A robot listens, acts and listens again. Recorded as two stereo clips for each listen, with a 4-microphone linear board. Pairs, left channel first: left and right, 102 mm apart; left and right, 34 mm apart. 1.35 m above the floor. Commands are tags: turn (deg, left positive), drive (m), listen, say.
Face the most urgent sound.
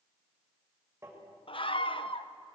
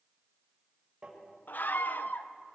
<turn deg="60"/>
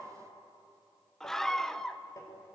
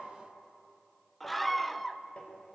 <say>Found it: a scream, straight ahead.</say>